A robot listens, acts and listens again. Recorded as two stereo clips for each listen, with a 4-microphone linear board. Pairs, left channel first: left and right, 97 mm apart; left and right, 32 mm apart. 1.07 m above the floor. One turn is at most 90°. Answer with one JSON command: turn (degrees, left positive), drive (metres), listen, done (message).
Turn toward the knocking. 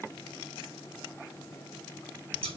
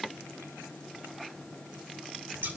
{"listen": true}
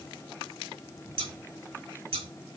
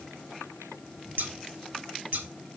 {"listen": true}
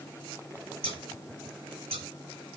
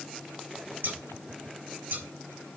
{"done": "I can't make out knocking to turn to."}